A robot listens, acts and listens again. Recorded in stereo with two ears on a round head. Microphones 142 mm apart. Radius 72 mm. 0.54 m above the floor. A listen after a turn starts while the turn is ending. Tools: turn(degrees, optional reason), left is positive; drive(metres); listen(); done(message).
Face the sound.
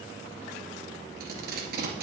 turn(degrees=-70, reason="The tape being pulled: about 70° right or 110° right.")
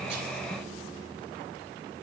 listen()
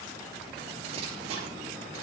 turn(degrees=-35, reason="So it is at 35° right.")
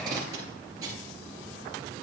turn(degrees=-20, reason="The tape being pulled is now 20° right.")
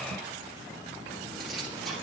done("Facing the tape being pulled, 2 to 4 m away.")